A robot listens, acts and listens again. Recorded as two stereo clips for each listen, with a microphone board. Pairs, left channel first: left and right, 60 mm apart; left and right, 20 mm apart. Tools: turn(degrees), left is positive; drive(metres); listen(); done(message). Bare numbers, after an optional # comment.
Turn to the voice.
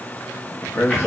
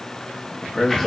# The man speaking: about 60° left or 120° left.
turn(60)
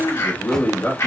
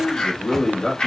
# So it is at 50° left.
turn(50)
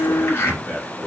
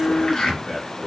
done("Found it: a man speaking, straight ahead, 1 to 2 m away.")